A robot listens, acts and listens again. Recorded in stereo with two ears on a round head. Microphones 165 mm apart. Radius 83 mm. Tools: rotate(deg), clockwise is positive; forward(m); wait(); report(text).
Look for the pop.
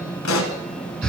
rotate(-90)
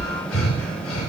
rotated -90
report("I heard a pop from this way, but can't make it out now.")